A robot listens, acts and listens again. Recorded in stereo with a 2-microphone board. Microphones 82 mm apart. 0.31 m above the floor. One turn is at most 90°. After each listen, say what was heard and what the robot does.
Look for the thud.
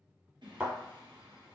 Turn 30° right.
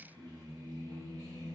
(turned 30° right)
Keep listening.
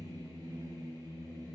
I heard a thud, but can't make it out now. It was about 15° left or 135° right.